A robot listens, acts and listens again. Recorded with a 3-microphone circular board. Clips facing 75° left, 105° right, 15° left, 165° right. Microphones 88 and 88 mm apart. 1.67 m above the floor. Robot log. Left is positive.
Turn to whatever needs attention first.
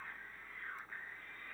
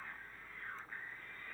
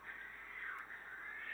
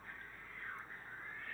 cmd idle
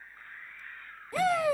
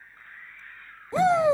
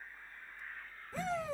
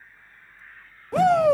note: The shout: 170° right.
cmd yaw -170
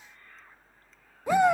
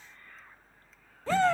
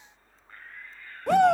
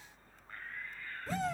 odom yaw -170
end: Found it: a shout, straight ahead.